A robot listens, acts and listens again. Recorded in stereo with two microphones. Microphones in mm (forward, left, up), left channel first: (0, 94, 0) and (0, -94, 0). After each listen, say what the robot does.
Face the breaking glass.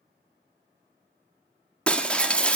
Turn 30° left.
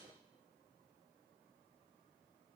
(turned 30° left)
Keep listening.
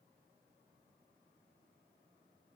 I heard breaking glass, but can't make it out now. It was about 25° right or 145° left.